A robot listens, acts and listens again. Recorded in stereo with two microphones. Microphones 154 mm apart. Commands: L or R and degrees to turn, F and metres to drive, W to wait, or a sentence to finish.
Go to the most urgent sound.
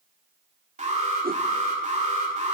R50
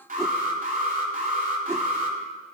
R70
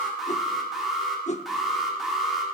F1.0
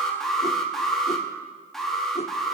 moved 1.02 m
F1.0
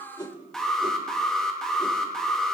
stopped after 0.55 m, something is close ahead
I am next to the alarm.